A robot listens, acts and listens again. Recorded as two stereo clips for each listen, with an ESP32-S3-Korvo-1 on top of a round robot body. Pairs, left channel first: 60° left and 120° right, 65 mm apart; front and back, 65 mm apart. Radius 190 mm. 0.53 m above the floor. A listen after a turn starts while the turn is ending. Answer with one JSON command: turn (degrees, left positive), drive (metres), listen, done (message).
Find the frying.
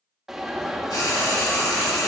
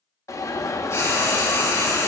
{"turn": 50}
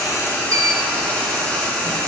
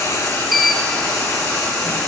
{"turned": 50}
{"done": "Facing the frying, over 4 m away."}